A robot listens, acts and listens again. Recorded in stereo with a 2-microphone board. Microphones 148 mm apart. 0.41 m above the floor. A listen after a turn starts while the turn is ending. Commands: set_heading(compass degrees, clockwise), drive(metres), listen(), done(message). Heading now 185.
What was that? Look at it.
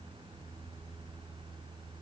listen()
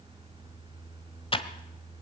set_heading(150)
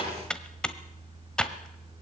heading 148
done("Facing the typing on a keyboard, 1 to 2 m away.")